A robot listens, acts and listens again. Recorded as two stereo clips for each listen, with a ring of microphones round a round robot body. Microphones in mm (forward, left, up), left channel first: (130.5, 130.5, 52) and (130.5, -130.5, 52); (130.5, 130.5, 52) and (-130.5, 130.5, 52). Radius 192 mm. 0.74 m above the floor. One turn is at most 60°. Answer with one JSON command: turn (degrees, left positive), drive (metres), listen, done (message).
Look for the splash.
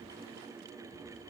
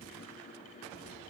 {"listen": true}
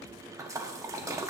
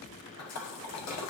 {"turn": -10}
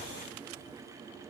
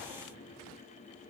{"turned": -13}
{"done": "Facing where the splash came from. I can't hear it now."}